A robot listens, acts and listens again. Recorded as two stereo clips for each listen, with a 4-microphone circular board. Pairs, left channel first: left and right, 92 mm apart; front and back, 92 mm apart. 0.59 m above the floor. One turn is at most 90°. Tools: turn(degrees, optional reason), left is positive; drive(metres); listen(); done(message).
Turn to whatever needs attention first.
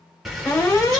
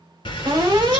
turn(degrees=90, reason="The alarm: 150° left.")
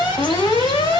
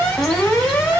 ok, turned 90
turn(degrees=65, reason="The alarm is now 65° left.")
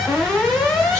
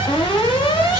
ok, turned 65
done("Facing the alarm, under 1 m away.")